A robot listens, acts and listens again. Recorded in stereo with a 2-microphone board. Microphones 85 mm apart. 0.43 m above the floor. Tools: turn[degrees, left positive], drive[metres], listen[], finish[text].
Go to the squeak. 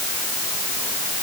Action: listen[]
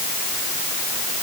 Action: listen[]
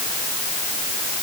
Action: finish[I can't make out a squeak.]